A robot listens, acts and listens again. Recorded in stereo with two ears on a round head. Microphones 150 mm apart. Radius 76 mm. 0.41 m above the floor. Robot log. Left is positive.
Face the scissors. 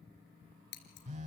note: The scissors: about 65° left or 115° left.
cmd yaw +65
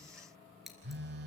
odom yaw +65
end: Found it: scissors, straight ahead, 2 to 4 m away.